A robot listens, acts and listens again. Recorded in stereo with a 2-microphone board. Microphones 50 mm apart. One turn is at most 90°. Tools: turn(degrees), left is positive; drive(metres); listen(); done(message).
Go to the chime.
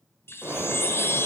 turn(degrees=55)
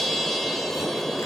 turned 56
drive(metres=1.0)
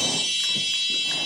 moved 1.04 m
drive(metres=1.0)
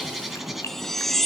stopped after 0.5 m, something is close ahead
done("Arrived at the chime, straight ahead.")